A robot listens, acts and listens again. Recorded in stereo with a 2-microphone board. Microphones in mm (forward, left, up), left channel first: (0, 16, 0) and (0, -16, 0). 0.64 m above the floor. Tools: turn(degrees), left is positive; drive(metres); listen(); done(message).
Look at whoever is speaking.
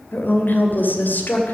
turn(degrees=70)
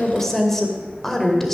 turn(degrees=10)
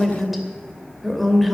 done("Facing the woman speaking.")